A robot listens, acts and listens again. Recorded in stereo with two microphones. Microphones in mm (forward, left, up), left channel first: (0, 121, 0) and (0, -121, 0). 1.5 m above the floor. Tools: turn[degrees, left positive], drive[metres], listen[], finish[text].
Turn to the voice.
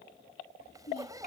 Thought: The child speaking: about 40° left or 140° left.
Action: turn[40]
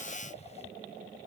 Action: listen[]
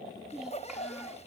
Action: finish[Found it: a child speaking, straight ahead.]